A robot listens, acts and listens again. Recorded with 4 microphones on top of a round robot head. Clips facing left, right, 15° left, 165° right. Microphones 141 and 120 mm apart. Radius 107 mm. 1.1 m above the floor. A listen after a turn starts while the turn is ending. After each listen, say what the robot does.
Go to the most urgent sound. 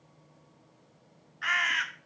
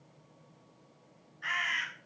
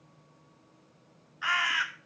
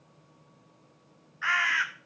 Keep listening.
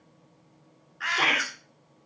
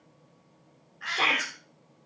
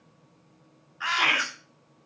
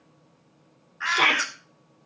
Turn 170° left.
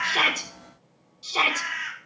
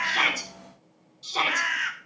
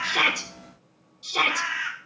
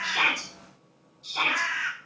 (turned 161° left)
Turn 10° left.
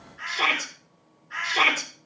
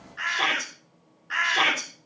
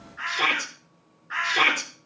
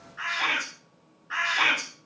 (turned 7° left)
Drive 1.0 m forward.
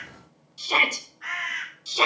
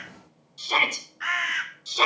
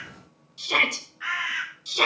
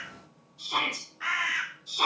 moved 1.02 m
Turn 10° left.
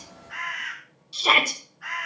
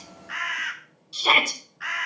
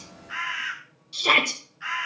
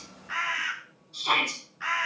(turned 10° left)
Drive 1.0 m forward.
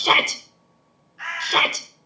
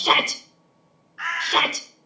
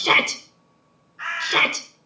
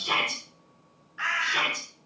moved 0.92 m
Drive 1.0 m forward.
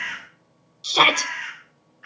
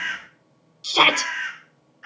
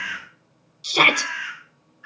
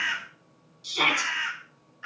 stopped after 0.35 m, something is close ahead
I am next to the shout.